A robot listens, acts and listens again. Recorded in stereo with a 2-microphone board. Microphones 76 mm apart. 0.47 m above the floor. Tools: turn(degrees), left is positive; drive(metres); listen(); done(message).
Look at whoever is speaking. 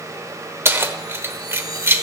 listen()
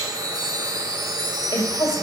turn(degrees=65)
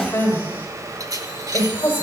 turn(degrees=30)
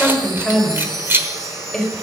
done("Facing the woman speaking.")